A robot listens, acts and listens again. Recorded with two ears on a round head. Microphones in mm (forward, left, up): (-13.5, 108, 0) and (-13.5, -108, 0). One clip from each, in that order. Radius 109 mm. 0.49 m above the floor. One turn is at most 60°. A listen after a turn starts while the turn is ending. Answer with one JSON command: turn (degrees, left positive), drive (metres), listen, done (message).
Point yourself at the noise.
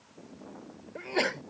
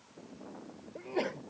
{"turn": 50}
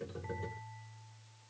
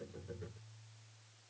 {"listen": true}
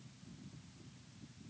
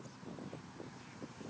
{"done": "I heard a sneeze, but can't make it out now. It was about straight ahead or 80° left."}